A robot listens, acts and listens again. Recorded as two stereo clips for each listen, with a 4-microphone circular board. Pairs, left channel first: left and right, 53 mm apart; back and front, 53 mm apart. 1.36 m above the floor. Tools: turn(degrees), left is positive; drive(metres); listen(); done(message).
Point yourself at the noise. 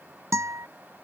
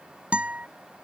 turn(degrees=-65)
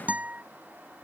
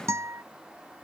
turn(degrees=-30)
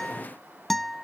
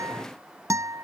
done("Found it: a guitar, straight ahead.")